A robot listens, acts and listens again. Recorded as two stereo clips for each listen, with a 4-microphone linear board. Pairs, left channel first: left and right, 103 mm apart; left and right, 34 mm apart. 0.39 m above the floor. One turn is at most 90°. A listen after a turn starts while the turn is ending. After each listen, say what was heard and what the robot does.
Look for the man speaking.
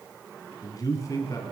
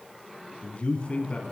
The man speaking: about 30° left or 150° left. Turn 30° left.
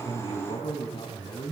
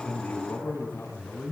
So it is at 125° left. Turn 90° left.
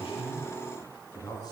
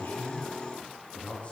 The man speaking is now 40° left. Turn 40° left.
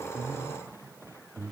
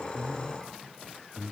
Found it: a man speaking, straight ahead, over 4 m away.